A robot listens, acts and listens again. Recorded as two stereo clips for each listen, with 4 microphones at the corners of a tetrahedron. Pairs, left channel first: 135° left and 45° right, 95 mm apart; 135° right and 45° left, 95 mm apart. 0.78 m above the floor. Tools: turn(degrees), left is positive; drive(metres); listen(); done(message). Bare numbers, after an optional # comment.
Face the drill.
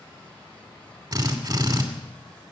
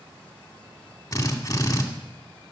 # The drill: 80° right.
turn(-80)
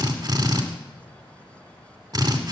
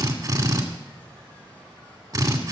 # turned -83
done("Facing the drill, 2 to 4 m away.")